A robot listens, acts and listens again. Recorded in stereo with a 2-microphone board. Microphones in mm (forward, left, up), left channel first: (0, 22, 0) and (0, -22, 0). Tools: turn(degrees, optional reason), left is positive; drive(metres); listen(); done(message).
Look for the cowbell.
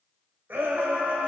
listen()
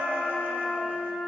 listen()
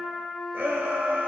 done("I can't make out a cowbell to turn to.")